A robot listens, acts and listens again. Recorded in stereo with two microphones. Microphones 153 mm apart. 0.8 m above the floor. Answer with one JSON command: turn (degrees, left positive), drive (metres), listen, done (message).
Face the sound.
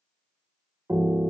{"turn": -20}
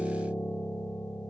{"done": "Found it: a piano, straight ahead."}